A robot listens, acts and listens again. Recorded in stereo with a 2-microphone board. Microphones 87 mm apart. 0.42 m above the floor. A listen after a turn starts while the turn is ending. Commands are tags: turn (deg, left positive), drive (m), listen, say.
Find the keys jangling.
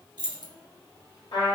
<turn deg="-55"/>
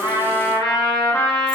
<listen/>
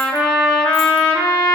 <listen/>
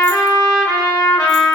<say>I heard keys jangling, but can't make it out now. It was about straight ahead or 70° right.</say>